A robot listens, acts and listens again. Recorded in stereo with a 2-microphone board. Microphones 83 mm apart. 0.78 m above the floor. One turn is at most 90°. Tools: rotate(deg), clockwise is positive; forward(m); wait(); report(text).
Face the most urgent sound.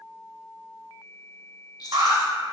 rotate(65)
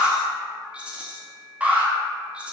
rotate(20)
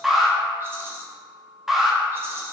report("Facing the alarm.")